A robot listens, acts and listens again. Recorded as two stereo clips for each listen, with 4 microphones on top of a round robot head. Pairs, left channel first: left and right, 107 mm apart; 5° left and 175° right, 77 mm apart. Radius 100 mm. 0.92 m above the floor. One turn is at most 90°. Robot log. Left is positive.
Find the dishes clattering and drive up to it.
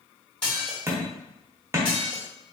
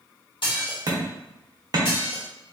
note: The dishes clattering: 10° left.
cmd yaw +10
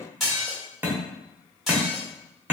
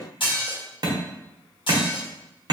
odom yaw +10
cmd fwd 1.0
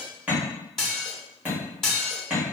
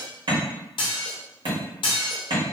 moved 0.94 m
cmd fwd 1.0
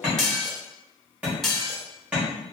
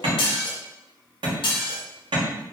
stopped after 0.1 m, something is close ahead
end: Arrived at the dishes clattering, straight ahead.